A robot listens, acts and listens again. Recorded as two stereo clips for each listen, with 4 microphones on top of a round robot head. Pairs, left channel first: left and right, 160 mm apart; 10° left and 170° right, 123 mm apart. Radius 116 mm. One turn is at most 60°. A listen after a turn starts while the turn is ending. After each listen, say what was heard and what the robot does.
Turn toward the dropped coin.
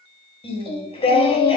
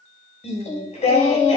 Keep listening.
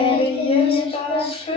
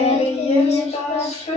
Keep listening.
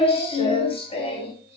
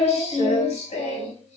I can't make out a dropped coin, only singing.